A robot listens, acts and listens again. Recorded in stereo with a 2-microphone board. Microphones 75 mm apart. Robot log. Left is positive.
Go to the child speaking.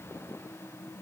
cmd idle
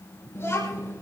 note: The child speaking: about 35° left or 145° left.
cmd yaw +35
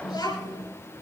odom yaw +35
note: So it is at 110° left.
cmd yaw +110
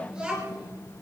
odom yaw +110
note: The child speaking is now 10° right.
cmd yaw -10
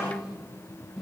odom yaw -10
cmd fwd 1.0
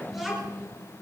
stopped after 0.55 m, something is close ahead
end: Blocked. The child speaking is further on, straight ahead.